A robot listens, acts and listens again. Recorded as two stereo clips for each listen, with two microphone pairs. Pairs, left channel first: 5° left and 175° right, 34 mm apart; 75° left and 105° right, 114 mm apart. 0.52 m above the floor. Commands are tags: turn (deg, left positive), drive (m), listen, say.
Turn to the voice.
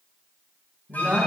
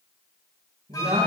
<turn deg="-115"/>
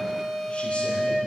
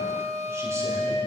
<listen/>
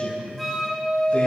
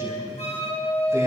<turn deg="-40"/>
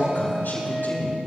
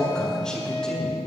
<turn deg="-10"/>
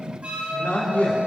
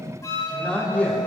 <say>Facing the man speaking.</say>